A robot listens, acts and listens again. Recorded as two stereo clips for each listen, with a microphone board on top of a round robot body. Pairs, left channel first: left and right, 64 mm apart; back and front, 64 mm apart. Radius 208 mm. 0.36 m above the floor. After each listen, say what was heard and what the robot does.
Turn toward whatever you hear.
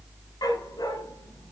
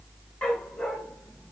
The dog barking: 110° left. Turn 110° left.
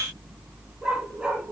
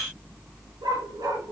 The dog barking is now 10° right. Turn 10° right.
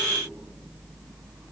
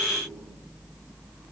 Keep listening.
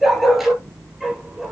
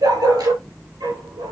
Found it: a dog barking, straight ahead.